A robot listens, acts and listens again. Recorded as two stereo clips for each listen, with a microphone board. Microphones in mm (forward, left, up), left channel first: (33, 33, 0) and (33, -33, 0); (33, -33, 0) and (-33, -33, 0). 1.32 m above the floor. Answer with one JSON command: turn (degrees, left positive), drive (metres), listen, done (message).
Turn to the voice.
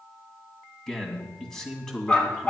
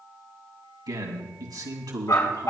{"turn": 175}
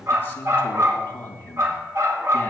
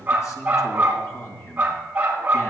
{"turn": 35}
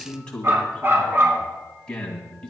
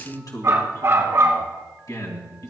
{"turn": 15}
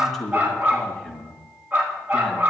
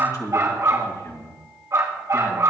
{"done": "Found it: a man speaking, straight ahead."}